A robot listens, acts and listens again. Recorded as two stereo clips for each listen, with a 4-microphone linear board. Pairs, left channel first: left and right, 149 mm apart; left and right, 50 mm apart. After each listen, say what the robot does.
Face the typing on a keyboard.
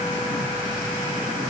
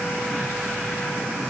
Keep listening.
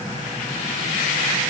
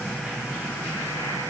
Keep listening.
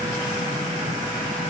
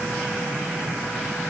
I can't make out typing on a keyboard to turn to.